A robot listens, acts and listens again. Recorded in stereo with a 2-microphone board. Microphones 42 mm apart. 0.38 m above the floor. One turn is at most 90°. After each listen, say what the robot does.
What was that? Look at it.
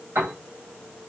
Turn 90° right.
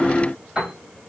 Turn 15° right.
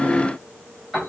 Facing the piano.